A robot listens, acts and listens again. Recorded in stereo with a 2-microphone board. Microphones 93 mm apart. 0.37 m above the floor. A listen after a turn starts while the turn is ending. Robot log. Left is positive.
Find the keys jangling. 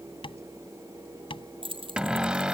note: The keys jangling: about 65° right or 115° right.
cmd yaw -65
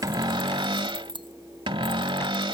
note: So it is at 55° right.
cmd yaw -55
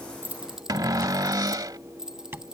end: Facing the keys jangling.